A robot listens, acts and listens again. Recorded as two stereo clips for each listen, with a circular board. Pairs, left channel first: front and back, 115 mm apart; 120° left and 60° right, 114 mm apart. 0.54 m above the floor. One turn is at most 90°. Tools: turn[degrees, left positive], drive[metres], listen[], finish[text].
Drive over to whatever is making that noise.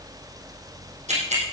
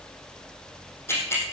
Thought: The ticking: 170° right.
Action: turn[-90]
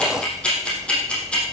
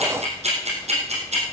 Thought: The ticking is now 80° right.
Action: turn[-80]
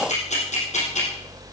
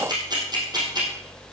Action: drive[1.0]
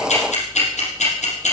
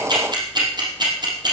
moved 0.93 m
Thought: The ticking is now 10° right.
Action: turn[-10]
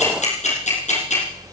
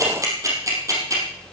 Action: drive[1.0]
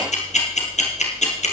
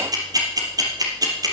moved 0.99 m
Action: drive[1.0]
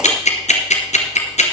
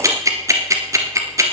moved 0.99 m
Action: drive[1.0]
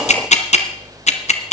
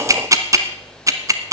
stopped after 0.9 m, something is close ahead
Action: finish[I am next to the ticking.]